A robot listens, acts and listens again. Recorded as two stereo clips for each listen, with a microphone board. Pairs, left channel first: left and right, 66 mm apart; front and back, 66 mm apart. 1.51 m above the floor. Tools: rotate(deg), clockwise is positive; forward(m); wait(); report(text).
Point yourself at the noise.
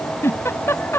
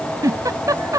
rotate(-145)
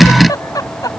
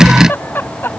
rotate(-60)
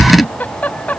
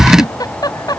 rotate(-25)
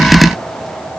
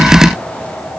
wait()
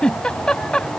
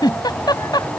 rotate(-15)
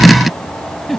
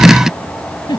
report("Found it: a giggle, straight ahead.")